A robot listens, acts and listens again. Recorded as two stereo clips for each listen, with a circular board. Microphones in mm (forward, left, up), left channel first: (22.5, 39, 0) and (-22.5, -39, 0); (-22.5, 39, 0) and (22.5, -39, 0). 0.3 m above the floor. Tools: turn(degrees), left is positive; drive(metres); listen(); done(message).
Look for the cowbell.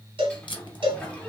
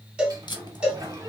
turn(degrees=-140)
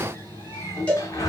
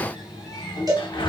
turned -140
turn(degrees=-15)
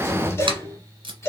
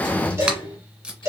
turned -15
done("Found it: a cowbell, straight ahead.")